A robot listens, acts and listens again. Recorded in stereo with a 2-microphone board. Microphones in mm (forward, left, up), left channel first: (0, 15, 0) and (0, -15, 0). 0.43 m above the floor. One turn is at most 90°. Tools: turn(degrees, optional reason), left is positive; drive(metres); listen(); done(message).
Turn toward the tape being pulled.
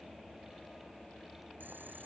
listen()
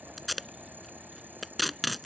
turn(degrees=30)
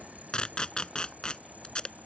turn(degrees=90, reason="So it is at 145° left.")
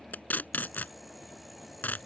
turn(degrees=90, reason="The tape being pulled is now 95° left.")
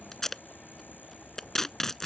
turn(degrees=10, reason="The tape being pulled is now 10° left.")
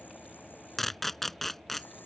done("Found it: tape being pulled, straight ahead.")